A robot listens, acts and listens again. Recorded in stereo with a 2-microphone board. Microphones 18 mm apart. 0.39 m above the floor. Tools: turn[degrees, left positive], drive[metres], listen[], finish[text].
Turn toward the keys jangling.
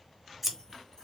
Action: listen[]
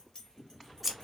Thought: The keys jangling: about 40° left or 140° left.
Action: turn[40]
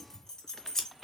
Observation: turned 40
Thought: The keys jangling: about 40° left or 140° left.
Action: turn[40]
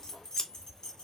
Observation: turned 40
Thought: The keys jangling: about 50° left or 130° left.
Action: turn[50]
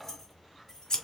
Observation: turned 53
Thought: So it is at 25° left.
Action: turn[25]
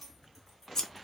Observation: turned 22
Thought: The keys jangling is now 10° left.
Action: turn[10]
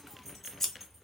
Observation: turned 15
Action: finish[Facing the keys jangling, 2 to 4 m away.]